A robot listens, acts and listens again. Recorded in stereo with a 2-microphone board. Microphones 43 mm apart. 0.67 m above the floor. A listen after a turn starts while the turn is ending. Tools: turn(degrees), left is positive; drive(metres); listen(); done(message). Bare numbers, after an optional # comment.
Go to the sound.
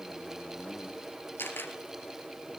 # The camera shutter: about 65° left or 115° left.
turn(65)
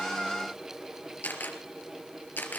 # So it is at 45° left.
turn(45)
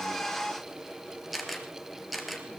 drive(1.0)
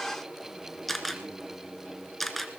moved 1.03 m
drive(1.0)
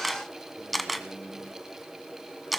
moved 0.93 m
drive(1.0)
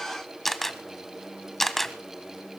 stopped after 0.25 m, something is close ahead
done("Arrived at the camera shutter, straight ahead.")